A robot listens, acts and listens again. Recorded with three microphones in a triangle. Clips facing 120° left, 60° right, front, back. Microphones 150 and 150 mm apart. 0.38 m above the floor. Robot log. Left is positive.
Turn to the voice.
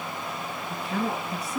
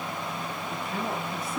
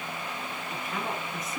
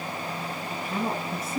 note: The woman speaking: 120° left.
cmd yaw +120
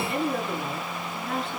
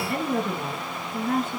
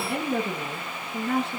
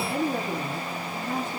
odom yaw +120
note: The woman speaking is now 15° right.
cmd yaw -15
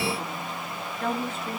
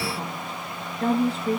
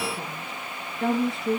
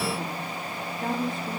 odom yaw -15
end: Found it: a woman speaking, straight ahead.